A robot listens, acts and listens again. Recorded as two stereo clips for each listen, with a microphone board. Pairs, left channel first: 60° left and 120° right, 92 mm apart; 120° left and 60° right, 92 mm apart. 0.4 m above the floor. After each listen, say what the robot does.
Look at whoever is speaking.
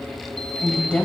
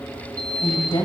Turn 130° left.
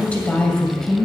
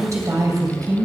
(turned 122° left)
Turn 25° right.
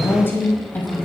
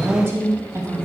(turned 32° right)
Turn 10° right.
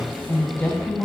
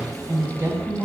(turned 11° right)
Turn 10° right.
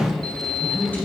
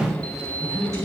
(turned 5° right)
Turn 10° right.
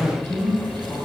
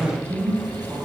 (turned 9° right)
Facing the woman speaking.